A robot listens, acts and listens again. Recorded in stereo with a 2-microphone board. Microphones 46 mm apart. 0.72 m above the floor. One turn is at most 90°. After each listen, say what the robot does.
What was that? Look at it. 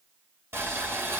Turn 65° right.
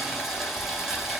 Facing the boiling.